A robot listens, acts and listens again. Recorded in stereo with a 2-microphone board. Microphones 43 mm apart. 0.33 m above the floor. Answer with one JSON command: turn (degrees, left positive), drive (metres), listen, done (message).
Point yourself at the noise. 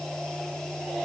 {"listen": true}
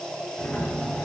{"turn": 30}
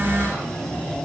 {"turn": 125}
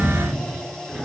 {"done": "Facing the sliding door."}